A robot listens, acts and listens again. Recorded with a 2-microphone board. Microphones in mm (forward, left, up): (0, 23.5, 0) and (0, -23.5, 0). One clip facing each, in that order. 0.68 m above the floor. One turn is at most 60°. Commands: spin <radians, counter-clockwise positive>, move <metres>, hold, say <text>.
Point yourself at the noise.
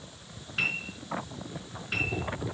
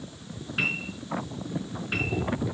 spin -0.52
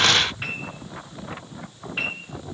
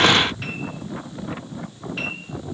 spin 0.44
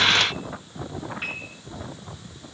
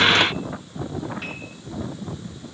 spin 0.44
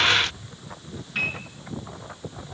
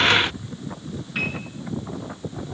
say Found it: a piano, straight ahead, over 4 m away.